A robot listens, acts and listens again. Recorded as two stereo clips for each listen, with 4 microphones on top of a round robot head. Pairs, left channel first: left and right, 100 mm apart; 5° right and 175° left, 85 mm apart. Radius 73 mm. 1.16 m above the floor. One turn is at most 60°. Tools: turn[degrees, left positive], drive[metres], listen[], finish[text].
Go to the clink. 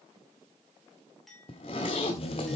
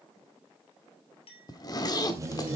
Action: drive[1.0]
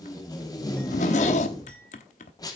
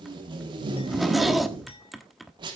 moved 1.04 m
Action: listen[]
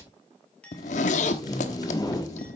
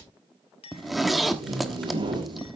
Thought: The clink is now 10° left.
Action: turn[10]
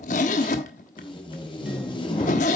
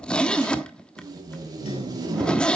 Action: listen[]
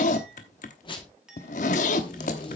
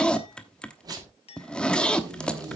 Action: drive[1.0]
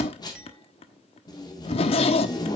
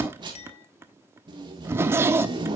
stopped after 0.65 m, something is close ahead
Action: listen[]
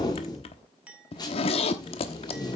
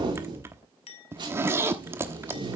Thought: The clink is now 10° right.
Action: turn[-10]
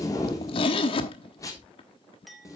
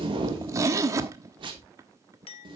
Action: finish[Arrived at the clink, straight ahead.]